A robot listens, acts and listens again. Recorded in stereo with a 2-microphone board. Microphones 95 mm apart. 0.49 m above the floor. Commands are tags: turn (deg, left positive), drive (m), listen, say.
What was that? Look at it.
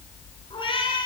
<turn deg="65"/>
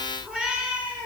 <turn deg="-15"/>
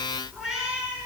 <turn deg="-10"/>
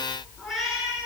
<say>Found it: a cat meowing, straight ahead.</say>